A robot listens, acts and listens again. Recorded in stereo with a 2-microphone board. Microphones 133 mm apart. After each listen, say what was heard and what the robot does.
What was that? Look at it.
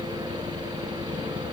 Keep listening.
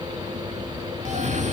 The cough: about 60° right or 120° right. Turn 60° right.
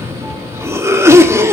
So it is at 20° right. Turn 20° right.
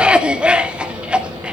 The cough is now 10° right. Turn 10° right.
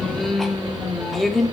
Facing the cough, 1 to 2 m away.